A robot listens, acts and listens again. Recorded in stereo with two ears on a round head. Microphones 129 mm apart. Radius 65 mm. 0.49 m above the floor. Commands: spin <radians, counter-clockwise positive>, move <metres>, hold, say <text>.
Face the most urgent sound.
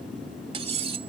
hold
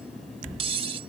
hold
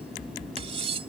say I can't make out anything urgent, only cutlery clinking.